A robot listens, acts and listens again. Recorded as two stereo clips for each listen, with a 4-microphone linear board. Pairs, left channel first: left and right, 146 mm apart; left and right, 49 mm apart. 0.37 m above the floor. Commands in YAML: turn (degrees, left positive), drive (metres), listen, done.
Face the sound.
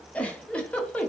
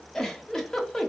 turn: 30
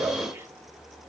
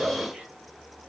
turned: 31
turn: -20
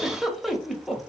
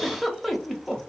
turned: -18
done: "Facing the giggle."